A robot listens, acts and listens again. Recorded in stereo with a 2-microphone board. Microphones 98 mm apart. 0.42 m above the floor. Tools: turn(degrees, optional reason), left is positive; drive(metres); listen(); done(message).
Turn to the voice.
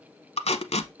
listen()
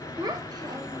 turn(degrees=-40, reason="The child speaking: about 40° right or 140° right.")
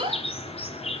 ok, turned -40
turn(degrees=-95, reason="So it is at 95° right.")
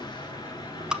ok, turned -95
listen()
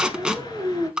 turn(degrees=-30, reason="The child speaking is now 30° right.")
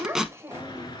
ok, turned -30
turn(degrees=-30, reason="The child speaking is now 30° right.")
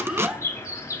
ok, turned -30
turn(degrees=-15, reason="The child speaking is now 15° right.")
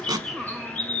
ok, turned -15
done("Found it: a child speaking, straight ahead.")